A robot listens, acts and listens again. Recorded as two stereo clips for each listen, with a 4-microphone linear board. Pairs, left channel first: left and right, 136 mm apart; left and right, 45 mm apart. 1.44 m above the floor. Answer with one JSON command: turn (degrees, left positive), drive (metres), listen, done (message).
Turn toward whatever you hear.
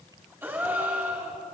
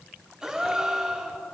{"turn": -30}
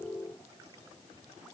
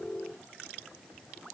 {"listen": true}
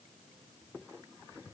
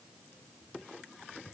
{"done": "I heard a gasp, but can't make it out now. It was about 15° left or 135° right."}